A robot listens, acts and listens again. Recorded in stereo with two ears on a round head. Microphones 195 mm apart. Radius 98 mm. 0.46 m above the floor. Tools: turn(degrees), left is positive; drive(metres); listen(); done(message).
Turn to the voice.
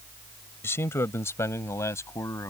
turn(degrees=30)
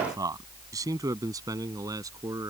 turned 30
turn(degrees=-15)
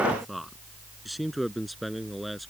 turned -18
done("Found it: a man speaking, straight ahead.")